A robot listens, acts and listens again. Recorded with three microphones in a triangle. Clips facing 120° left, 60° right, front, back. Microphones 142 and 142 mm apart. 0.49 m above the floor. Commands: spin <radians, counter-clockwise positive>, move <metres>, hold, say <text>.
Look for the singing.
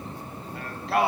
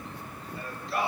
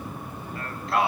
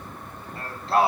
spin 2.18
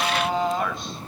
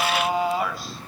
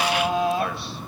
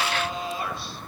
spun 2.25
spin 0.44
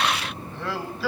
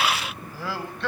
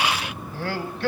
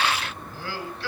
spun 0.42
spin 0.61
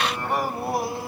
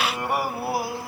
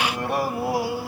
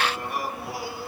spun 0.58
spin 0.52
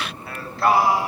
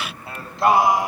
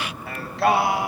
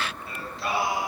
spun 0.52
spin 0.26
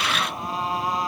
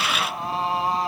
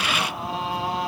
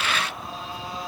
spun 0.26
say Facing the singing.